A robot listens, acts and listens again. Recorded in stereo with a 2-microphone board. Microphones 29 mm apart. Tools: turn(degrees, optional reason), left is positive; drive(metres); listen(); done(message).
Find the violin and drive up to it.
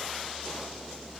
listen()
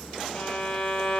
turn(degrees=35, reason="The violin: about 35° left or 145° left.")
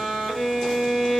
drive(metres=1.0)
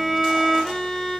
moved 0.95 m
drive(metres=1.0)
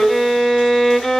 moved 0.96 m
turn(degrees=10, reason="The violin is now 10° left.")
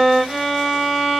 drive(metres=1.0)
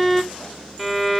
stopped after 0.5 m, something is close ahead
done("I am next to the violin.")